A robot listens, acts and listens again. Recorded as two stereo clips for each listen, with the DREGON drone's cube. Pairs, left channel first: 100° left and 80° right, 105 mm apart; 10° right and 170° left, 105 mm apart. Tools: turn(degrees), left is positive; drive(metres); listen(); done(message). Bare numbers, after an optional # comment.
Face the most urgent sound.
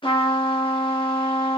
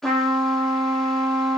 listen()
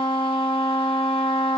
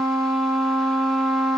listen()
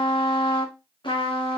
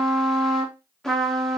done("I can't make out anything urgent to turn to.")